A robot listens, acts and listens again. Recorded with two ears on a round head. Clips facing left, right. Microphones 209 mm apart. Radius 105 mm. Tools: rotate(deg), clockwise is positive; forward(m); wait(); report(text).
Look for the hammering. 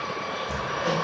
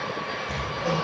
rotate(-30)
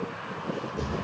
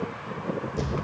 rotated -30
rotate(20)
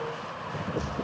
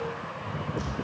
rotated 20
report("Facing the hammering.")